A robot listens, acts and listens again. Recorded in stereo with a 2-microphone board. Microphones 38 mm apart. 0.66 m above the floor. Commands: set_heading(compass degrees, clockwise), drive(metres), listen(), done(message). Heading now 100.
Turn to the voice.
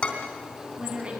set_heading(135)
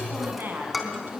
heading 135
set_heading(245)
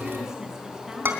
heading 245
listen()
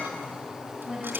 set_heading(260)
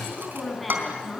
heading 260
done("Facing the woman speaking.")